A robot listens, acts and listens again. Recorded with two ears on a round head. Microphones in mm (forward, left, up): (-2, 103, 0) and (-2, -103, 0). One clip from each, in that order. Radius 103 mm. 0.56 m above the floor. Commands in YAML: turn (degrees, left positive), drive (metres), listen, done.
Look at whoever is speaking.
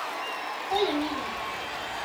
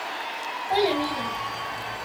turn: -50
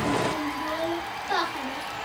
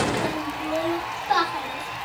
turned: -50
done: "Found it: a child speaking, straight ahead, 2 to 4 m away."